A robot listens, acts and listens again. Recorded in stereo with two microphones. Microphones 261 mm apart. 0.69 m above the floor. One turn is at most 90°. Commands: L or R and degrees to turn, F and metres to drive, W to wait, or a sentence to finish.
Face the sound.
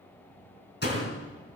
L40
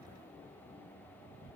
W
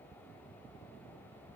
I heard a door slam, but can't make it out now. It was about straight ahead or 100° left.